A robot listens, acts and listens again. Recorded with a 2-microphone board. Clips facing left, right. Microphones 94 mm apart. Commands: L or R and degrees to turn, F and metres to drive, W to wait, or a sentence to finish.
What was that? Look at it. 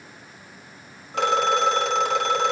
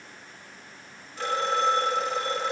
L90
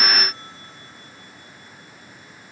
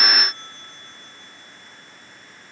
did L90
W
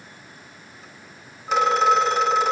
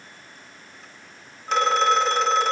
Facing the phone ringing, 2 to 4 m away.